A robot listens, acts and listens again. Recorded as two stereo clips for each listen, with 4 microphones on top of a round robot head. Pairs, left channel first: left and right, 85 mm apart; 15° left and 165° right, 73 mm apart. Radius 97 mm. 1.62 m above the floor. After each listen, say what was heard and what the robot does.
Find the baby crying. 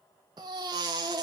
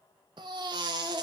The baby crying: 140° right. Turn 140° right.
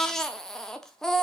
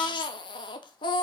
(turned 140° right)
Facing the baby crying.